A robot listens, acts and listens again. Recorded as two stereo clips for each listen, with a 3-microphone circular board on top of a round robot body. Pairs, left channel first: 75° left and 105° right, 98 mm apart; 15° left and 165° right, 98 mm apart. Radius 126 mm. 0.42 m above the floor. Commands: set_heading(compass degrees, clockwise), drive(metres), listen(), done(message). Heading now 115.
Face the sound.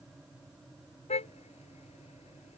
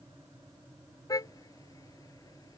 set_heading(45)
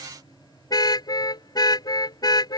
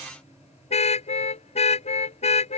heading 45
set_heading(20)
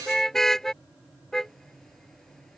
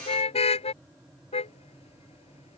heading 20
set_heading(30)
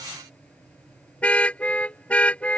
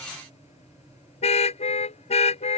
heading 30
done("Facing the car horn.")